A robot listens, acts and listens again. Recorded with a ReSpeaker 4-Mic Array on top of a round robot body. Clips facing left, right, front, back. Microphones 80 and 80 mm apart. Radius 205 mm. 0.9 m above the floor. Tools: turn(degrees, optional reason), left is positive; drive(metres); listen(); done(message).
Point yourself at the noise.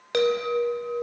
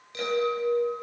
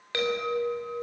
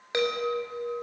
turn(degrees=110, reason="The chime: 110° left.")
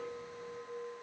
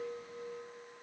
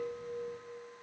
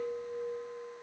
turn(degrees=30, reason="The chime is now 30° left.")
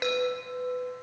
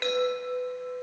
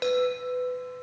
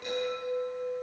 turn(degrees=10, reason="The chime is now 10° left.")
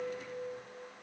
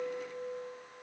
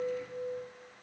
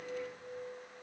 done("Facing the chime.")